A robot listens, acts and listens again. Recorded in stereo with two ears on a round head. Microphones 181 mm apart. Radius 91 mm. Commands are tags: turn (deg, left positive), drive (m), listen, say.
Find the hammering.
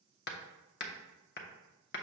<turn deg="55"/>
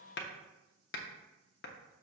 <turn deg="60"/>
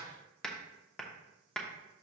<say>Found it: hammering, straight ahead.</say>